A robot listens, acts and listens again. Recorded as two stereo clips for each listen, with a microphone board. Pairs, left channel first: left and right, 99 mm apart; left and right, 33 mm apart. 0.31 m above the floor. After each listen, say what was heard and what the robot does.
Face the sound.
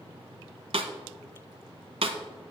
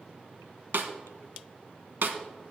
Turn 90° right.
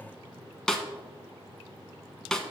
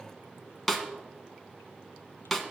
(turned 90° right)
Facing the snare drum, 1 to 2 m away.